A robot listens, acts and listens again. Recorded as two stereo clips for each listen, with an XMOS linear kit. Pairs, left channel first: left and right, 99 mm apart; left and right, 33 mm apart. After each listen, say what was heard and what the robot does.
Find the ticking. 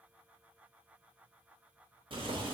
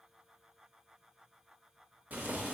Keep listening.
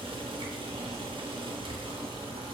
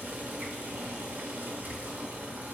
Keep listening.
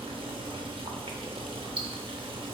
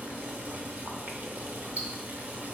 The ticking: about 65° right or 115° right. Turn 65° right.
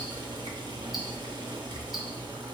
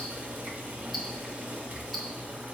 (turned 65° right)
Keep listening.
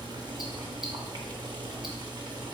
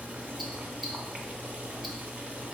Keep listening.
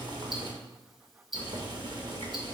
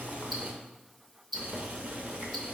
Found it: ticking, straight ahead, under 1 m away.